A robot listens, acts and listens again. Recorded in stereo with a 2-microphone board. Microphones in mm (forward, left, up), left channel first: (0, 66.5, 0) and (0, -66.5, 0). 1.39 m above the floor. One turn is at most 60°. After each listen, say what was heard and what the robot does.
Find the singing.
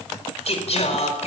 The singing: about 55° left or 125° left. Turn 55° left.
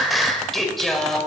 Found it: singing, straight ahead.